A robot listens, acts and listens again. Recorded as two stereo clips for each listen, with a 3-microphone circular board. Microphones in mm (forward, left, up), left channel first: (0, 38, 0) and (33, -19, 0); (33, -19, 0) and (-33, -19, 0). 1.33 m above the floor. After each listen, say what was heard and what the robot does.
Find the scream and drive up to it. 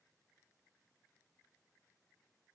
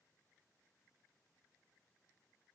Keep listening.
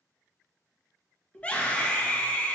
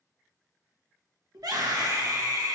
The scream: 175° right. Turn 175° right.
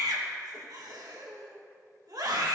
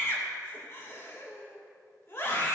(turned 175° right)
The scream is now 45° right. Turn 45° right.
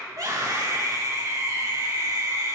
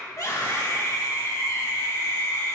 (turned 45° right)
The scream is now 30° right. Turn 30° right.
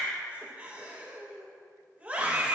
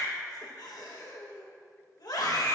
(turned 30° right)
Drive 1.0 m forward.
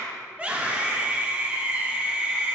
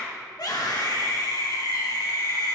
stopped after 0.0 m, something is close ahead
The scream is now 10° left. Turn 10° left.
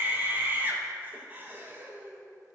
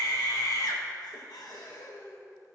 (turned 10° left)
Something is in my way. I am facing the scream but have not reached it.